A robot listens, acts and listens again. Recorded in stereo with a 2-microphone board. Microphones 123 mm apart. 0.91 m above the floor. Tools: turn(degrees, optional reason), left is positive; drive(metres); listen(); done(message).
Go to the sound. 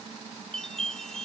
turn(degrees=30)
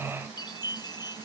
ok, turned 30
turn(degrees=145, reason="So it is at 145° left.")
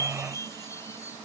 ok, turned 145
turn(degrees=25, reason="The chime is now 25° left.")
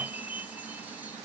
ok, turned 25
turn(degrees=-15, reason="The chime is now 15° right.")
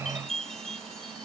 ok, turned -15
drive(metres=1.0)
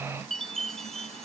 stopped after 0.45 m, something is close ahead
done("Something is in my way. I am facing the chime but have not reached it.")